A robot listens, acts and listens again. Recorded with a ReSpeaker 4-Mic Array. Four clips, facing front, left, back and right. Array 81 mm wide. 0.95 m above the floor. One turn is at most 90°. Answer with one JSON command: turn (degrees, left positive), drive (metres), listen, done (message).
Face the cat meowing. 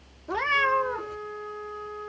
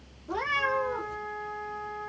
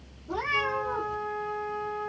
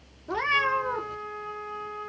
{"turn": -35}
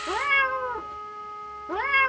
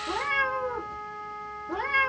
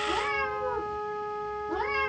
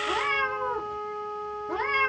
{"turn": -15}
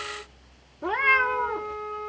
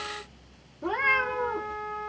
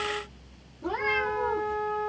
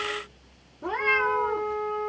{"done": "Found it: a cat meowing, straight ahead, under 1 m away."}